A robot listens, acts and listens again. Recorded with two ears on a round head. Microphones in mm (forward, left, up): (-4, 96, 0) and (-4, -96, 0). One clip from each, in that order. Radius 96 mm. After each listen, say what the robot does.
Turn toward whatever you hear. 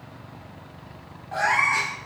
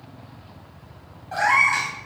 Turn 20° right.
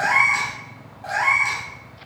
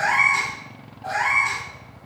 Turn 20° left.
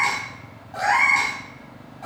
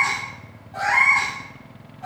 Turn 25° left.
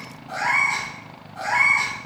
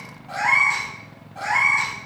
Facing the cat meowing, 2 to 4 m away.